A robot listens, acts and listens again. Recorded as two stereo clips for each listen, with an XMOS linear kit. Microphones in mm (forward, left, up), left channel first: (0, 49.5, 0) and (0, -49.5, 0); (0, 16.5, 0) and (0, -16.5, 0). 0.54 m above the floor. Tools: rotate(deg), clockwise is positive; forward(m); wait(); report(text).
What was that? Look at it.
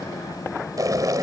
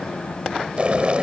rotate(40)
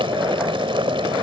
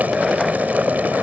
rotate(100)
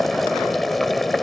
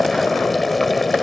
report("Facing the boiling.")